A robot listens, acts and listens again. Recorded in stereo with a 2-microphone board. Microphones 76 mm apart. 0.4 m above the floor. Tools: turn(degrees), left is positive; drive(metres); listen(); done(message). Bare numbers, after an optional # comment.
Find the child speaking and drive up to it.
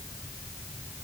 listen()
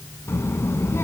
# The child speaking: about 35° left or 145° left.
turn(35)
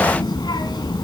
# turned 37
# So it is at 105° left.
turn(105)
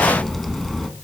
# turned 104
drive(1.0)
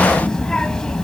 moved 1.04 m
# The child speaking is now 10° left.
turn(10)
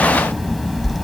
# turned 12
drive(1.0)
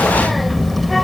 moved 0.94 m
drive(1.0)
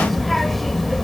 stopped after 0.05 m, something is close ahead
done("Arrived at the child speaking, straight ahead.")